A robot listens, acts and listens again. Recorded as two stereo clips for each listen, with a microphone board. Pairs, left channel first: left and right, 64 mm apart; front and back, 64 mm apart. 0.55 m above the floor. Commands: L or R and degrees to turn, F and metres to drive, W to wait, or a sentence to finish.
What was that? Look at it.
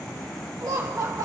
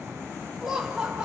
R105
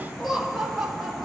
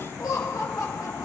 R10
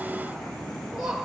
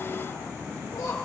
R10
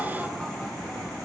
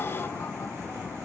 W
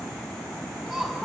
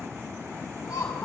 Found it: laughter, straight ahead.